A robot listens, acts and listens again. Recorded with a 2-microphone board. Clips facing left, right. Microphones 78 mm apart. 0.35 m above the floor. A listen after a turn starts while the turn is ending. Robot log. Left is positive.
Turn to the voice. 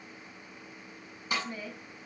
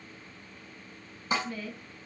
note: The woman speaking: about 25° left or 155° left.
cmd yaw +25
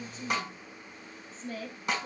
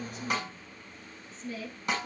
note: So it is at 125° left.
cmd yaw +125
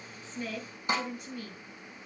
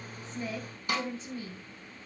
note: The woman speaking is now 30° right.
cmd yaw -30
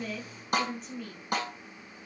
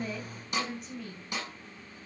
end: Found it: a woman speaking, straight ahead, 2 to 4 m away.